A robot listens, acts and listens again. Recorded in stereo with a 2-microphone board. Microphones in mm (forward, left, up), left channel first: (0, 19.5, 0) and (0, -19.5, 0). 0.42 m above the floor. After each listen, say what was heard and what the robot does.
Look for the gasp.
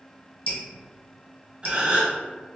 The gasp: about 35° right or 145° right. Turn 35° right.
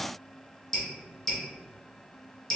Keep listening.
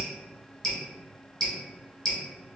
I heard a gasp, but can't make it out now. It was about straight ahead or 110° right.